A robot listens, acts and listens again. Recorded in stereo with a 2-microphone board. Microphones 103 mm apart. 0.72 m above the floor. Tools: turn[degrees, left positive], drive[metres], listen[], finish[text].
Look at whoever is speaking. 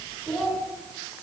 Action: turn[30]
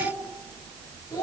Thought: So it is at 145° left.
Action: turn[145]
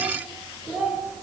Action: finish[Found it: a child speaking, straight ahead, 2 to 4 m away.]